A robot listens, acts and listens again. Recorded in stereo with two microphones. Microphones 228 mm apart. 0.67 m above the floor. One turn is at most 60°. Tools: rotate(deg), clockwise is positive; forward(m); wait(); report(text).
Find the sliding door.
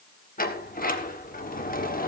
rotate(-40)
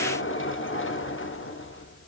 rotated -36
rotate(-60)
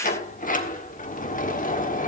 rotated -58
rotate(-40)
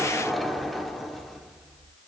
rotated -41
report("Facing the sliding door, 1 to 2 m away.")